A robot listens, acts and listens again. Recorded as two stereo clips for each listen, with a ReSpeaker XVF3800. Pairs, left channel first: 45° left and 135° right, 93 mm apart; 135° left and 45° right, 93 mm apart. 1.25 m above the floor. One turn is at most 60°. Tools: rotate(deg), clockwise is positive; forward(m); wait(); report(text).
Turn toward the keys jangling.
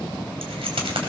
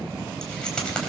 rotate(60)
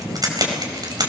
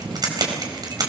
rotate(60)
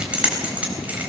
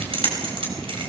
rotate(60)
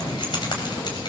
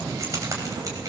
rotate(-10)
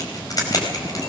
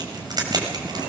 report("Found it: keys jangling, straight ahead.")